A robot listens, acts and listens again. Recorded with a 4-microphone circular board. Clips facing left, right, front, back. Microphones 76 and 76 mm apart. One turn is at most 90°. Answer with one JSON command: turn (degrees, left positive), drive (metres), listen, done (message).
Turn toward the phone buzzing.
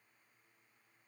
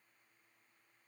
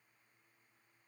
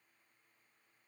{"listen": true}
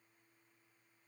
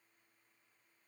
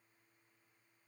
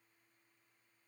{"listen": true}
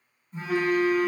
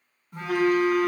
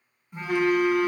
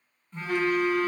{"turn": -75}
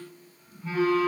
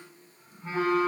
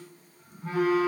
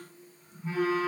{"turn": -30}
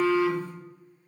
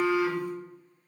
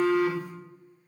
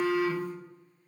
{"turn": -15}
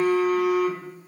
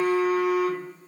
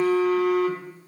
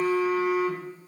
{"done": "Found it: a phone buzzing, straight ahead, under 1 m away."}